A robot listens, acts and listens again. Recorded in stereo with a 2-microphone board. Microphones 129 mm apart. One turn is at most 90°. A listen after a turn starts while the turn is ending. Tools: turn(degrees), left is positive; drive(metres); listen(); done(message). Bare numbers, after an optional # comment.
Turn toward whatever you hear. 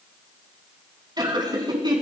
# The laughter: about 35° right or 145° right.
turn(-35)
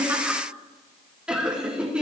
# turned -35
done("Found it: laughter, straight ahead, over 4 m away.")